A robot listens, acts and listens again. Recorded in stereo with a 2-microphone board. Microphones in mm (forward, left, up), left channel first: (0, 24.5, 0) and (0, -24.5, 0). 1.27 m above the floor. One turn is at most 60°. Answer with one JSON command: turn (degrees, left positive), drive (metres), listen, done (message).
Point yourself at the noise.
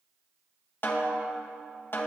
{"turn": 45}
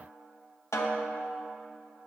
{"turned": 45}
{"turn": 60}
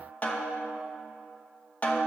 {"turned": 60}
{"turn": 35}
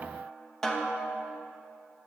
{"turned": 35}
{"turn": 10}
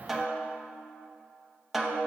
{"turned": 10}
{"done": "Facing the snare drum, under 1 m away."}